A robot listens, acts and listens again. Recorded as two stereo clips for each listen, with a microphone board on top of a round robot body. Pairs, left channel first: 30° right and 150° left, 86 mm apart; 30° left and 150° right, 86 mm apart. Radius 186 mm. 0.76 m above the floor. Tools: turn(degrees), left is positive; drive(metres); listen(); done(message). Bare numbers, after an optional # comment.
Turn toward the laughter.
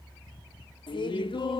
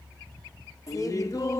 # The laughter: 20° right.
turn(-20)
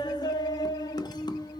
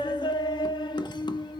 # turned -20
done("Facing the laughter.")